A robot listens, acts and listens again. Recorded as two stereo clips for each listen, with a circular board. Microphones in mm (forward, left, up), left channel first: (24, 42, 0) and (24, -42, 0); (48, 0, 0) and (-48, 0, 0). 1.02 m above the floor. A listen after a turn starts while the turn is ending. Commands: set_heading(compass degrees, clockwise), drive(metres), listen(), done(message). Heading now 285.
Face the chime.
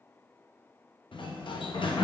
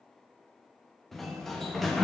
listen()
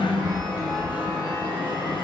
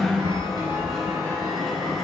set_heading(150)
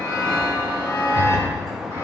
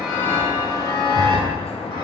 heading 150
set_heading(110)
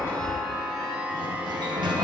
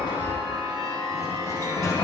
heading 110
set_heading(125)
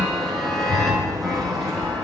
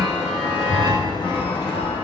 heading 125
done("Facing the chime.")